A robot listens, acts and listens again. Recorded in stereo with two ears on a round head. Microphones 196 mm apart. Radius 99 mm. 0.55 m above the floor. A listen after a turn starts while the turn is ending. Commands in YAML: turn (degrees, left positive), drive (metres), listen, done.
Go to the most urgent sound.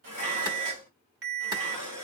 turn: -60
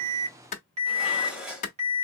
turn: -35
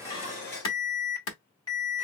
turn: 20
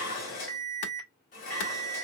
drive: 1.0
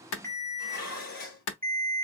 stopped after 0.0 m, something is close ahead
turn: 10
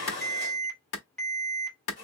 done: "Something is in my way. I am facing the alarm but have not reached it."